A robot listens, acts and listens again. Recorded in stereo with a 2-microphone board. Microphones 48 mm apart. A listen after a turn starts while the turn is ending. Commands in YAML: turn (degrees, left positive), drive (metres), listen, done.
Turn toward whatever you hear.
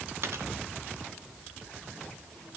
turn: -60
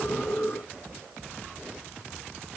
listen: true
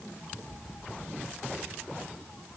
done: "I heard a dropped coin, but can't make it out now. It was about straight ahead or 60° right."